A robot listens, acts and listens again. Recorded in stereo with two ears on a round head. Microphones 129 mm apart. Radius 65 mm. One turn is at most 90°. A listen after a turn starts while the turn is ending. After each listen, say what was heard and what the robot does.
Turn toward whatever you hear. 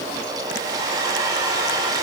The hair dryer: about 25° right or 155° right. Turn 25° right.
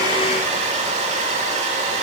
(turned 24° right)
So it is at 125° right. Turn 90° right.
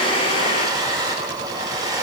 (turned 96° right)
The hair dryer is now 30° right. Turn 30° right.
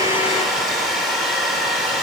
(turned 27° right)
Facing the hair dryer, 2 to 4 m away.